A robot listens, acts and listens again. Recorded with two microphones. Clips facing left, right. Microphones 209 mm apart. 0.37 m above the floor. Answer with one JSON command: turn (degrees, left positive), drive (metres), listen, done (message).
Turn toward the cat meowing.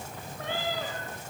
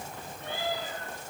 {"turn": 90}
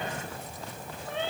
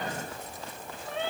{"done": "Found it: a cat meowing, straight ahead, over 4 m away."}